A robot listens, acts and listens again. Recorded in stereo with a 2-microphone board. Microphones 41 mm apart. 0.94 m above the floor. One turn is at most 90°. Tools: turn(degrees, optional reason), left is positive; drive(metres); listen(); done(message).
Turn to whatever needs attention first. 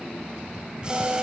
listen()
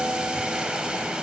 listen()
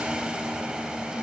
done("I can't make out anything urgent, only boiling and a guitar.")